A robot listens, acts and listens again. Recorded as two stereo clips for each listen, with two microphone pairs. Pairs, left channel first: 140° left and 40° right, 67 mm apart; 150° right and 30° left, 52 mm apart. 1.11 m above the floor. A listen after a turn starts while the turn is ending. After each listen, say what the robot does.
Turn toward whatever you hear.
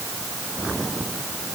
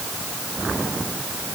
Keep listening.
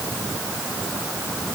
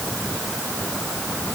Keep listening.
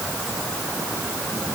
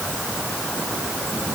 I can't make out anything.